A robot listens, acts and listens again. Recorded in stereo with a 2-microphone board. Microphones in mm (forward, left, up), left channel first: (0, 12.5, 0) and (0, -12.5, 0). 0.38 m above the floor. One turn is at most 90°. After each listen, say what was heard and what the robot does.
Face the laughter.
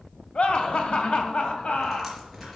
The laughter: about 65° left or 115° left. Turn 65° left.
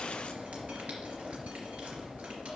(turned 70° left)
Keep listening.
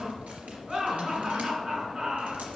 So it is at 20° right. Turn 20° right.
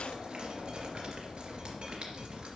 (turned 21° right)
Keep listening.
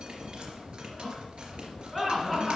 Found it: laughter, straight ahead, over 4 m away.